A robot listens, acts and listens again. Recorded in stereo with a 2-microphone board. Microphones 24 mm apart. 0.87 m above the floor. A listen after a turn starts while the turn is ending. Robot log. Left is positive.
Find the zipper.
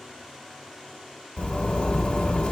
note: The zipper: about 55° left or 125° left.
cmd yaw +55
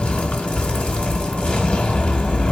note: So it is at 65° left.
cmd yaw +65
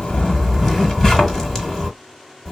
note: The zipper is now 15° left.
cmd yaw +15
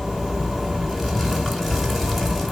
end: Facing the zipper, 1 to 2 m away.